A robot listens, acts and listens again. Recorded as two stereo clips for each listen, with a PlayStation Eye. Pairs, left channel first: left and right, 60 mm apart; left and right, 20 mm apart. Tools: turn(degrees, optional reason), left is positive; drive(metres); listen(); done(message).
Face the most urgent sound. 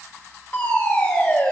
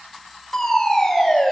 turn(degrees=30, reason="The fire alarm: about 30° left or 150° left.")
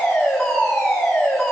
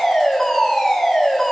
done("Found it: a fire alarm, straight ahead.")